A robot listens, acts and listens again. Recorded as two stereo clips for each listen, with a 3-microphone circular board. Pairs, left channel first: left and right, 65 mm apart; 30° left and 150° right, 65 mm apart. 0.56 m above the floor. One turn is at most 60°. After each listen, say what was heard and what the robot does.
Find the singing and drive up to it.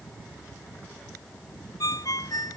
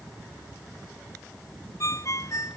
Keep listening.
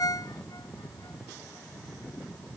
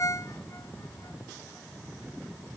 Keep listening.
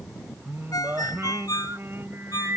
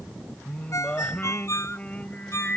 The singing: 40° right. Turn 40° right.
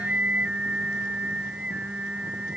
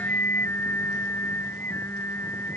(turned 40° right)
The singing is now 20° right. Turn 20° right.
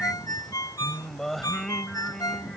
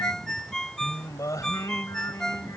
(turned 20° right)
Drive 1.0 m forward.
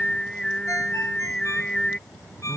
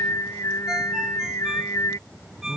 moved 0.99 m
The singing is now 15° left. Turn 15° left.
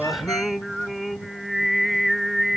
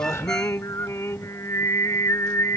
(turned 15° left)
Drive 1.0 m forward.
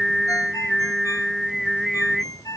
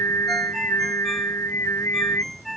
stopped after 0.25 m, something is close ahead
Arrived at the singing, straight ahead.